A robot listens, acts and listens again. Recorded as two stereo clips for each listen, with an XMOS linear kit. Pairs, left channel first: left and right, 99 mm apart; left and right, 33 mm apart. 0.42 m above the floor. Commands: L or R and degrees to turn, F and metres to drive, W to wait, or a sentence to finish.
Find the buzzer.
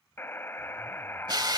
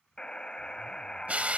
L25
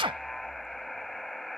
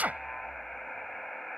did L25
Found it: a buzzer, straight ahead.